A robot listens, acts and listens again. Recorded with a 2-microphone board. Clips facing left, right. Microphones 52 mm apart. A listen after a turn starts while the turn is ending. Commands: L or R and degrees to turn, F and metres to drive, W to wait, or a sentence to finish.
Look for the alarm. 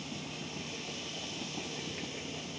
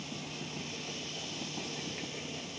W
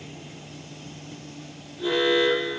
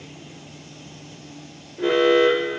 R70
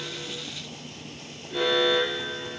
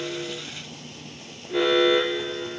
R35
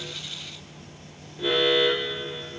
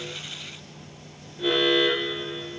Facing the alarm.